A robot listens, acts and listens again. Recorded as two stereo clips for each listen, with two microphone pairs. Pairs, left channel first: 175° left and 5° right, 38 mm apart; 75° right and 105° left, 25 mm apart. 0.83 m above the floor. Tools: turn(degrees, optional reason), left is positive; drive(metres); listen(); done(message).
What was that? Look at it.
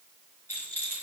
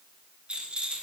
turn(degrees=150, reason="The rattle: 150° left.")
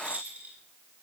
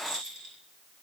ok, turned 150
turn(degrees=35, reason="The rattle is now 35° left.")
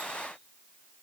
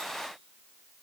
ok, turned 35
listen()
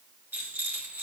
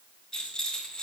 turn(degrees=-10, reason="The rattle is now 10° right.")
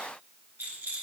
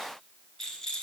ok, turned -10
done("Found it: a rattle, straight ahead.")